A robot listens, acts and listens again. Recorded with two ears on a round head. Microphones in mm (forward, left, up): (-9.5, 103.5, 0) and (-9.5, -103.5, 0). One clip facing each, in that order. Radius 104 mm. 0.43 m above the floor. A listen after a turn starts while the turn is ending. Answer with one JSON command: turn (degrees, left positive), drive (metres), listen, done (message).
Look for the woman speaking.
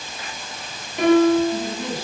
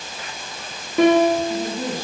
{"turn": -45}
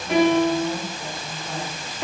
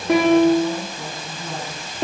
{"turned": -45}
{"turn": -105}
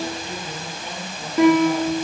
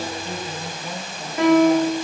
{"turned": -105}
{"turn": 25}
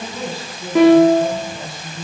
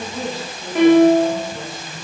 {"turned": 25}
{"done": "Facing the woman speaking."}